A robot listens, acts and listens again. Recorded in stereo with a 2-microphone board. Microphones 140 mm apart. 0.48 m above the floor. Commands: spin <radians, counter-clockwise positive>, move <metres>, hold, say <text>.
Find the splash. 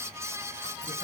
hold
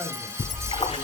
spin 0.87
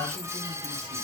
hold
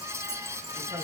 say I heard a splash, but can't make it out now. It was about straight ahead or 80° left.